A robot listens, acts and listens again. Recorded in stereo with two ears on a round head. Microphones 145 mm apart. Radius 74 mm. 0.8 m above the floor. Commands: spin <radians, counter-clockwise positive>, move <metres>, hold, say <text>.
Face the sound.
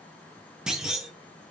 spin -0.52
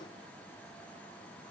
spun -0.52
hold
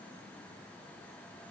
say I heard a clunk, but can't make it out now. It was about 25° left or 145° right.